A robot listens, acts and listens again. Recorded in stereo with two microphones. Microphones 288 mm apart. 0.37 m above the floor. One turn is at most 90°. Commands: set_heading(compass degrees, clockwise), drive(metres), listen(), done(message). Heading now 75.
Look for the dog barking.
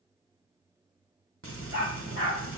set_heading(25)
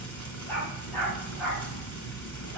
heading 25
done("Facing the dog barking, over 4 m away.")